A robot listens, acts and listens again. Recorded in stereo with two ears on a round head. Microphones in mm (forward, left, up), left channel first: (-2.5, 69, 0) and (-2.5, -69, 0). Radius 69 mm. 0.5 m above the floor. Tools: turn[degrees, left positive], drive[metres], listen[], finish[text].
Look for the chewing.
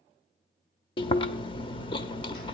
Thought: The chewing: about 35° left or 145° left.
Action: turn[35]
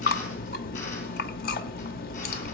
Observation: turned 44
Thought: So it is at 100° left.
Action: turn[100]
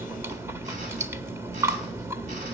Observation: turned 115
Thought: The chewing is now 20° right.
Action: turn[-20]
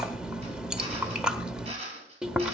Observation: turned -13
Action: finish[Facing the chewing.]